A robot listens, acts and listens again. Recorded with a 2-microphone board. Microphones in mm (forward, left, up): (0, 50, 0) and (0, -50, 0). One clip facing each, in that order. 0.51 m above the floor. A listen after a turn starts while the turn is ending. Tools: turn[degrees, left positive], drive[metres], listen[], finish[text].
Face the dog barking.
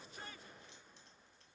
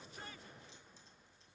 Action: listen[]
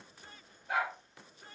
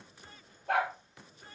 Thought: The dog barking: about 65° right or 115° right.
Action: turn[-65]
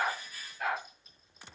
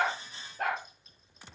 Thought: So it is at 50° right.
Action: turn[-50]
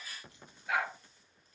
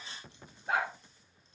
Thought: The dog barking is now 35° right.
Action: turn[-35]
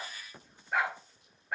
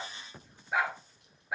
Action: finish[Found it: a dog barking, straight ahead.]